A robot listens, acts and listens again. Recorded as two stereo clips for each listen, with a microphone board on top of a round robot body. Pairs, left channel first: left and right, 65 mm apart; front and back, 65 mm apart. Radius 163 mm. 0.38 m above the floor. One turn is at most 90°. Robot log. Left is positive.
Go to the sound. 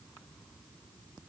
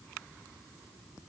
cmd idle
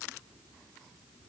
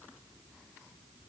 cmd idle
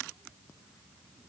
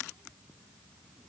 end: I can't make out anything.